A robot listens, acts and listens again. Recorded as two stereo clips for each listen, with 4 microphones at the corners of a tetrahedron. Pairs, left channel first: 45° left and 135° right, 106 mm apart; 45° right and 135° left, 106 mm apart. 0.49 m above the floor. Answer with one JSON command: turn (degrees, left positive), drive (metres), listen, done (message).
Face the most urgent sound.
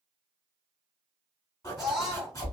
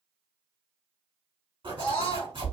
{"turn": -45}
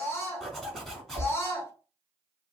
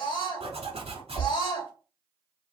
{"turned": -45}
{"turn": -15}
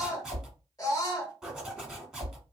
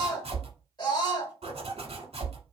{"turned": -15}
{"done": "Found it: a scream, straight ahead."}